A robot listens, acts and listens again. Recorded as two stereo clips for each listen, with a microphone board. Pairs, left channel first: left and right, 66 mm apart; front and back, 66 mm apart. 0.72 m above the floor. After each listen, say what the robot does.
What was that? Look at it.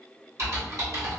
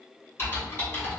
Turn 55° right.
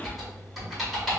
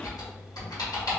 Facing the typing on a keyboard.